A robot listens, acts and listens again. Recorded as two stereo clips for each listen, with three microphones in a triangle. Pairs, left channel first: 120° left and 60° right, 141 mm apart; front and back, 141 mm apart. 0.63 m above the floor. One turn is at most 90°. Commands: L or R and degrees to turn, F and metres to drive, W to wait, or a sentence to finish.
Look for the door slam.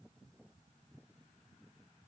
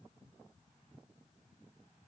W
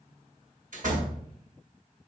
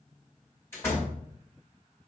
R70
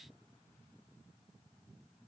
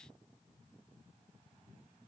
I heard a door slam from this way, but can't make it out now.